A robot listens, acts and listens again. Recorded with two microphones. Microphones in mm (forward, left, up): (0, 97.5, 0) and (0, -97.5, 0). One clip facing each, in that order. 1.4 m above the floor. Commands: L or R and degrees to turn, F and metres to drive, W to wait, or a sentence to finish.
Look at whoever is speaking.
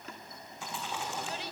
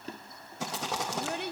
R55
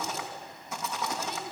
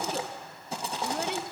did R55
W
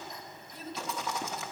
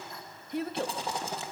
R70
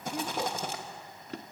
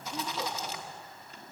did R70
W
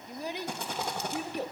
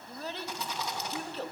L15
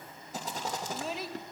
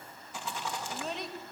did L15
Found it: a child speaking, straight ahead.